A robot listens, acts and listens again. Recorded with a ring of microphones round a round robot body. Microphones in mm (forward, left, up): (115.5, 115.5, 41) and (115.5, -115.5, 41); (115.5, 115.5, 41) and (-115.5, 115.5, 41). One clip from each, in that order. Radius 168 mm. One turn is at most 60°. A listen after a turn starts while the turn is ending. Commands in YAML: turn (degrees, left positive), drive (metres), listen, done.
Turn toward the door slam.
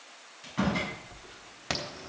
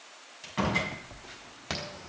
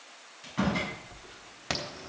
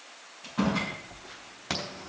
turn: -55
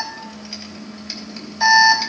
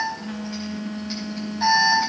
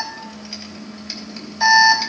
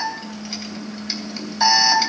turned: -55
done: "I heard a door slam from this way, but can't make it out now."